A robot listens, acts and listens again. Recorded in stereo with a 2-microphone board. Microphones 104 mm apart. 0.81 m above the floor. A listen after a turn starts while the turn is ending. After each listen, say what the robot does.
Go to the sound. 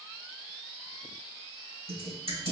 Turn 75° right.
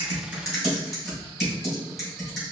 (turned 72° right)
Drive 1.0 m forward.
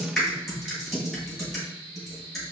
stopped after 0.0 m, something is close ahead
Something is in my way. I am facing the typing on a keyboard but have not reached it.